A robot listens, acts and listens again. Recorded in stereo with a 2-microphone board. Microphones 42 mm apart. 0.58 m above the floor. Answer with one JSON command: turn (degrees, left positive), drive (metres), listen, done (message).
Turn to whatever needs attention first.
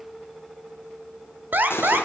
{"turn": -45}
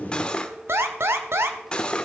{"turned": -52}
{"turn": -80}
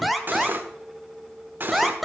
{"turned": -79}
{"done": "Found it: an alarm, straight ahead, 1 to 2 m away."}